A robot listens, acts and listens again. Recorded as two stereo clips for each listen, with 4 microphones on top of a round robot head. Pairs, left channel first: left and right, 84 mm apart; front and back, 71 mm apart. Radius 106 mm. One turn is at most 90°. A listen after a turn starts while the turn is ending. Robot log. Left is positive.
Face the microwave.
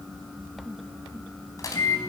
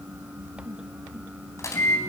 note: The microwave: 45° left.
cmd yaw +45
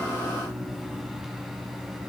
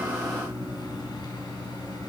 end: Found it: a microwave, straight ahead, over 4 m away.